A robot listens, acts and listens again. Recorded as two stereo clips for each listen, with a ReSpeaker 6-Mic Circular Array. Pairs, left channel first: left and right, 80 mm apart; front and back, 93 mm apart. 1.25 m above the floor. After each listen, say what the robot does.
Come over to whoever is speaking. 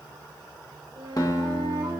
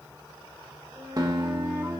Keep listening.
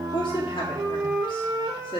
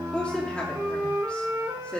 Turn 80° left.
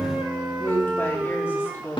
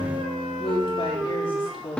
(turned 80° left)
Turn 30° left.
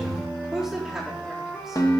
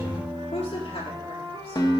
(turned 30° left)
Drive 1.0 m forward.
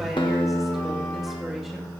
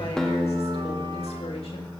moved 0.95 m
Keep listening.
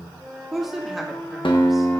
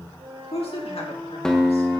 Drive 1.0 m forward.
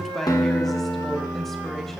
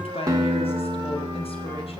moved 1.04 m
Drive 1.0 m forward.
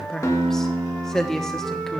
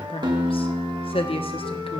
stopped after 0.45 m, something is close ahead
I am next to the woman speaking.